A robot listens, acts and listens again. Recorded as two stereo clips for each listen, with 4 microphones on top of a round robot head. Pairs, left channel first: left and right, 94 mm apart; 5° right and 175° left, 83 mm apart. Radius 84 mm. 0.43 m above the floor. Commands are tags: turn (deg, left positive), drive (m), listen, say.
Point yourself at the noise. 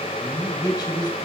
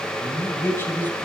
<turn deg="60"/>
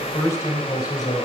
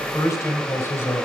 <turn deg="50"/>
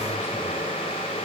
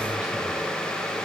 <listen/>
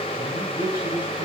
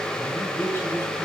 <turn deg="50"/>
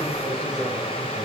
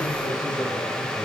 <listen/>
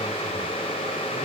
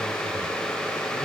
<listen/>
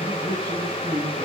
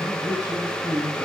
<say>Facing the man speaking.</say>